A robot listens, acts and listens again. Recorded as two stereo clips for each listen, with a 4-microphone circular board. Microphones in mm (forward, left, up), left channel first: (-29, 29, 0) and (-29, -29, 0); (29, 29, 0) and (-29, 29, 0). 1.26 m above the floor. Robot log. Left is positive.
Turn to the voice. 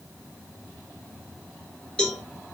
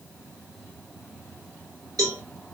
cmd idle
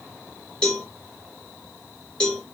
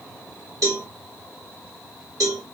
cmd idle
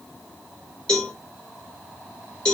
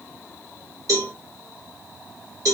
end: I can't make out anyone speaking to turn to.